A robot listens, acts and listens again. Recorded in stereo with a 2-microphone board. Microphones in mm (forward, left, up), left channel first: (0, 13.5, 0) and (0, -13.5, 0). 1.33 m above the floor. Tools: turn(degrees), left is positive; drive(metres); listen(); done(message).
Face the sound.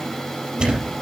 turn(degrees=-40)
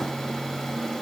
listen()
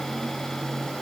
done("I heard a thud, but can't make it out now. It was about straight ahead or 100° right.")